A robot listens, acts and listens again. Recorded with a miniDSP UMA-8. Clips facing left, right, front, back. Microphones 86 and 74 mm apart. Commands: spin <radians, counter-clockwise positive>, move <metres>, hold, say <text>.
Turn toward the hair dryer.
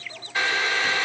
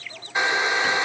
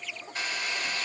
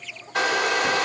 spin -2.79
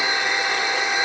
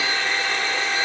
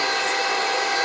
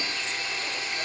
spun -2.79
spin 0.26
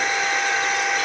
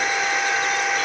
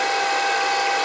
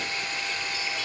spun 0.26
say Found it: a hair dryer, straight ahead.